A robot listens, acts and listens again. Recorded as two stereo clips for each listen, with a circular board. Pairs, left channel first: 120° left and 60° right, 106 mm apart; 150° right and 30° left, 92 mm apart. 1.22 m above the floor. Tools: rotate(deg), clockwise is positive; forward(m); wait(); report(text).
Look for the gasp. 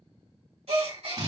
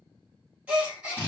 rotate(45)
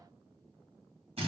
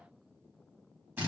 report("I heard a gasp from this way, but can't make it out now.")